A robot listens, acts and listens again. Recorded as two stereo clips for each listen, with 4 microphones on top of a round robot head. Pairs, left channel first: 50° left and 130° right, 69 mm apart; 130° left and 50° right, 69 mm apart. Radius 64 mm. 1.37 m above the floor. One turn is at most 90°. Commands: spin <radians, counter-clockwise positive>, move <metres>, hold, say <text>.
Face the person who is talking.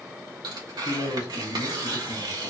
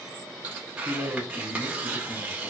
spin 1.31
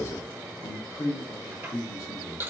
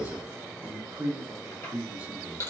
spin 0.17
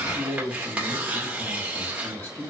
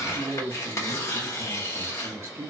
say Facing the man speaking, 1 to 2 m away.